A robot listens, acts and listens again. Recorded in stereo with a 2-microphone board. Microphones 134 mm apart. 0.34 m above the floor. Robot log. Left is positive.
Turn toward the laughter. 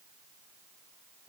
cmd idle
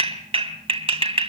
cmd idle
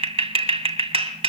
end: I can't make out laughter, only a clap.